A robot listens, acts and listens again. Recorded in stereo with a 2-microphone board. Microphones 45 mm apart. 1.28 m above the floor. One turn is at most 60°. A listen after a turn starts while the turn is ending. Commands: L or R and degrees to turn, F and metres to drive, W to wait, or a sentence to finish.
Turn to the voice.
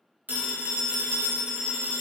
W
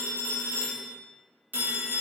W
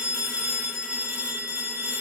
I can't make out anyone speaking, only a phone ringing.